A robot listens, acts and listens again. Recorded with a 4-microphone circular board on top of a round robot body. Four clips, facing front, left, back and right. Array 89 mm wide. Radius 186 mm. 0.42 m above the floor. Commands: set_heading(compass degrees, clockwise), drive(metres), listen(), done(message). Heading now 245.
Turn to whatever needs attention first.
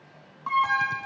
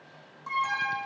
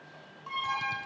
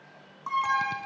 set_heading(265)
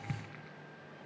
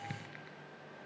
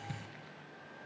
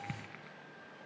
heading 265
listen()
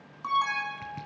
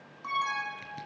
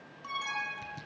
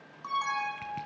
done("Found it: an alarm, straight ahead.")